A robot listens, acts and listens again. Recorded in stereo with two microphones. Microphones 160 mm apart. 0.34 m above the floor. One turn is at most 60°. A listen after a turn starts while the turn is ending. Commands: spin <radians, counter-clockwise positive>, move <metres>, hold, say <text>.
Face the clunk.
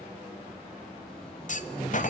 spin 0.87
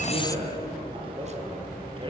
hold
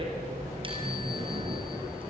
say I heard a clunk, but can't make it out now. It was about straight ahead or 80° left.